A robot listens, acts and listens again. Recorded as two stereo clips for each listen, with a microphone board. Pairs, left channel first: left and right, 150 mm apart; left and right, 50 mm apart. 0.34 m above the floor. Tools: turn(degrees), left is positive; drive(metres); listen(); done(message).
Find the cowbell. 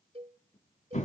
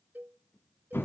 turn(degrees=-40)
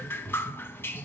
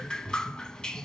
listen()
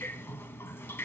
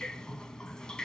listen()
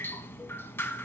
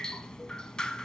done("I heard a cowbell, but can't make it out now. It was about straight ahead or 100° right.")